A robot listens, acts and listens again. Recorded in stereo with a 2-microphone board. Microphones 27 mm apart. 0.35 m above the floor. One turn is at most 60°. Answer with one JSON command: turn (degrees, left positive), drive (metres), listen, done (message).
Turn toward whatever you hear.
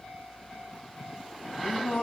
{"turn": 60}
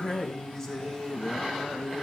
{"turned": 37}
{"turn": 15}
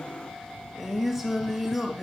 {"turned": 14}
{"done": "Found it: singing, straight ahead."}